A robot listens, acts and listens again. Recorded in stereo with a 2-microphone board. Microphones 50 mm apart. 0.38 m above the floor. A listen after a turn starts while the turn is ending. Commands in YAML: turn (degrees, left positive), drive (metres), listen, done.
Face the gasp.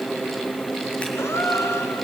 turn: 90
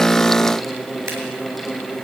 done: "Facing where the gasp came from. I can't hear it now."